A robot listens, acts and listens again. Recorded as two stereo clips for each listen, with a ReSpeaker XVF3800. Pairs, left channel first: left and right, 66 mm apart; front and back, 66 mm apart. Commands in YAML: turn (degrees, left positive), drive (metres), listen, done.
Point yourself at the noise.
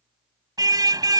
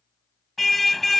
turn: -90
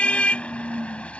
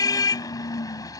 turn: 20
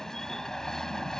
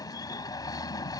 turn: 10
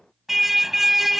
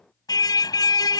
done: "Found it: a car horn, straight ahead."